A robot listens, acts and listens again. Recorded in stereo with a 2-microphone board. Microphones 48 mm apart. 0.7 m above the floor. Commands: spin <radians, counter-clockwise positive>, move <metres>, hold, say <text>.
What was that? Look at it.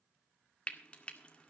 spin 0.44
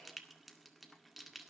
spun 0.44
say Facing the frying, 1 to 2 m away.